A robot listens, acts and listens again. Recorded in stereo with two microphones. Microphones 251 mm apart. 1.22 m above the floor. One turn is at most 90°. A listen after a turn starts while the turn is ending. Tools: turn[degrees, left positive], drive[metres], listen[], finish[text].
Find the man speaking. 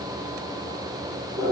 Action: listen[]
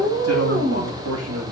Action: turn[-90]
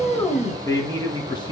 Thought: So it is at 20° left.
Action: turn[20]
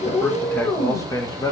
Thought: The man speaking is now 15° left.
Action: turn[15]
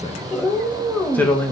Action: finish[Facing the man speaking.]